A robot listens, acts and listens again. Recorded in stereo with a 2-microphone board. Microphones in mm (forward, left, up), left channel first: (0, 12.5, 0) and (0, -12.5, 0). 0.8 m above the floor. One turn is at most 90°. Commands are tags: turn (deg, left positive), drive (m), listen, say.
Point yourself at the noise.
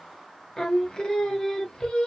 <turn deg="30"/>
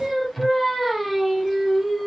<say>Found it: singing, straight ahead, under 1 m away.</say>